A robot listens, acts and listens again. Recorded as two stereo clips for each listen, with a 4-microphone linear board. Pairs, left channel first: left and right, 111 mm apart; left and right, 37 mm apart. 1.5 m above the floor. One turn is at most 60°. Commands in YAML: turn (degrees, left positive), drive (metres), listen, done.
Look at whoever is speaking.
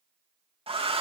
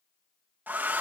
listen: true
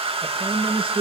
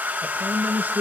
turn: -55
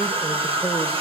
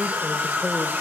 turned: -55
listen: true
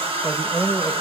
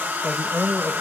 done: "Found it: a man speaking, straight ahead, 1 to 2 m away."